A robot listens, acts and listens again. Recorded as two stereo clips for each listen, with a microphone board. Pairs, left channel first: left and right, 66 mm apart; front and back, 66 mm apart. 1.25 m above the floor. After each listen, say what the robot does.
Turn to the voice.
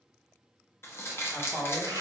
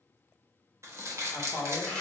Turn 25° left.
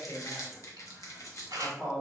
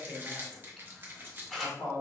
Turn 10° left.
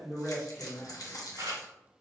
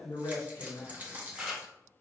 Facing the man speaking.